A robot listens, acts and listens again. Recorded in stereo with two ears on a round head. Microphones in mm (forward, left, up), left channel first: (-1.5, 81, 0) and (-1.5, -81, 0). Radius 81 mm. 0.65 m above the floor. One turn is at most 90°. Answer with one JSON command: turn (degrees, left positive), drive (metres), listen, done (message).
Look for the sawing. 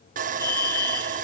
{"turn": -45}
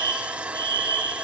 {"done": "Found it: sawing, straight ahead."}